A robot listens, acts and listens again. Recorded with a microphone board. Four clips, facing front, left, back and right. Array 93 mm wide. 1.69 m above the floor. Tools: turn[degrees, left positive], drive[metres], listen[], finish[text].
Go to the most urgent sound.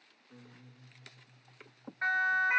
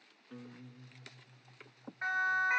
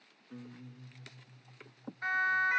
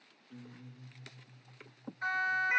Thought: The siren: 30° left.
Action: turn[30]
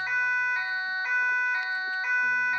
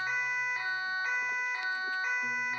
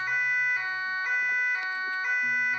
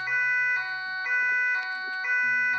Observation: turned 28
Action: drive[1.0]
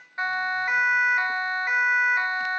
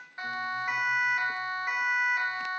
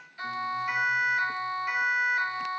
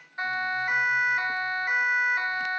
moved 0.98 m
Action: drive[1.0]
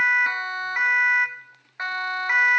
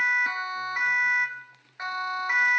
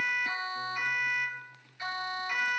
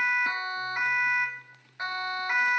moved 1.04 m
Thought: The siren is now 10° left.
Action: turn[10]
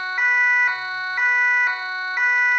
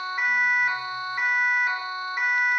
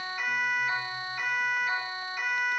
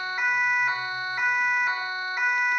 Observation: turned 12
Action: drive[1.0]
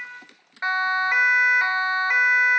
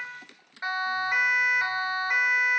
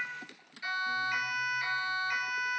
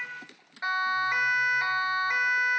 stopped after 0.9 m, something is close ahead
Action: finish[Arrived at the siren, straight ahead.]